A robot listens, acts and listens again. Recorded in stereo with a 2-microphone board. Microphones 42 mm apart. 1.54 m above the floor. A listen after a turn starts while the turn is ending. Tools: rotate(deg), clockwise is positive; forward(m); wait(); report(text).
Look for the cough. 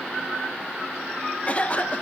rotate(-30)
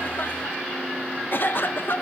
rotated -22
rotate(-130)
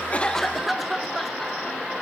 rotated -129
report("Found it: a cough, straight ahead, 1 to 2 m away.")